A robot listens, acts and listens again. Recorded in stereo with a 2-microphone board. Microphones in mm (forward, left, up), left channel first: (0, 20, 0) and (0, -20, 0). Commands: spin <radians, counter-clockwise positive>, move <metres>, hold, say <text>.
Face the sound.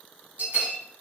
spin -0.79
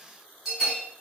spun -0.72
spin -0.26
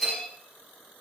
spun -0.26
say Facing the bell.